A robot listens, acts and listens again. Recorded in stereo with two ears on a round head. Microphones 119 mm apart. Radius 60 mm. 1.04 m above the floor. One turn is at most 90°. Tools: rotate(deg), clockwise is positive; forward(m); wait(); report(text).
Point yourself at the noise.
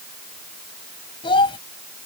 rotate(-40)
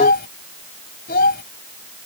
rotate(-90)
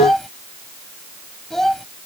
report("Facing the child speaking.")